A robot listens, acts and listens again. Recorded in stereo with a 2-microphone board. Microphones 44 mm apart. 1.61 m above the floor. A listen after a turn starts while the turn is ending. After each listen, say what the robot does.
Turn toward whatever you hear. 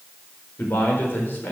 Turn 55° left.
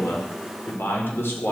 Turn 60° left.
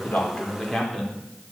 Found it: a man speaking, straight ahead, 2 to 4 m away.